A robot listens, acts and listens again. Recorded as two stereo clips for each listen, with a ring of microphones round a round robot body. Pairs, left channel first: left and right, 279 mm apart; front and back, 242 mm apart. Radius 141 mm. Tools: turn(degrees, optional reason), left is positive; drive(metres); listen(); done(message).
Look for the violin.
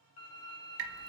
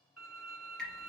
turn(degrees=90, reason="The violin: 90° left.")
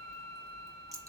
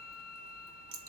turn(degrees=10, reason="The violin is now 10° left.")
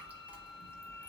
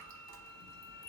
listen()
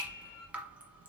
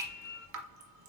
listen()
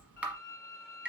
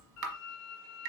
done("Found it: a violin, straight ahead.")